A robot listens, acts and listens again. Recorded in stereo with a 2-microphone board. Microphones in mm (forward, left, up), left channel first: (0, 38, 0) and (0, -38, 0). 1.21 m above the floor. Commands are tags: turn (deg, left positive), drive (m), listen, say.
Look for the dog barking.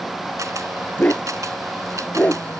<turn deg="20"/>
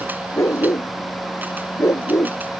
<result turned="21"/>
<turn deg="135"/>
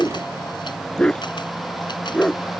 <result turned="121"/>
<turn deg="10"/>
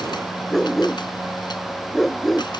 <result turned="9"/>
<say>Found it: a dog barking, straight ahead.</say>